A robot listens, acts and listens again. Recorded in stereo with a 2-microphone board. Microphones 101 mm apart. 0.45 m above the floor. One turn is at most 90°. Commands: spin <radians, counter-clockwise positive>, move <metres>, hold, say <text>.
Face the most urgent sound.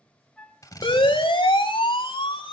spin 0.96
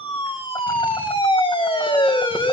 spin 1.13
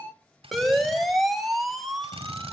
say Found it: a siren, straight ahead, 2 to 4 m away.